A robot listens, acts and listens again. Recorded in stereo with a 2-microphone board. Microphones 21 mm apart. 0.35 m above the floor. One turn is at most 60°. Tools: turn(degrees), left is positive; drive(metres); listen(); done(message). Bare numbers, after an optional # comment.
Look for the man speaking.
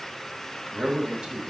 # The man speaking: about 45° right or 135° right.
turn(-45)
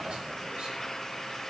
listen()
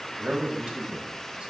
# So it is at 80° right.
turn(-60)
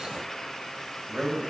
# The man speaking is now 55° right.
turn(-55)
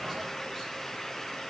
listen()
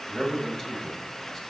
# The man speaking is now 20° left.
turn(20)
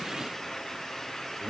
# The man speaking is now 10° left.
turn(10)
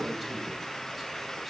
done("Facing the man speaking, 1 to 2 m away.")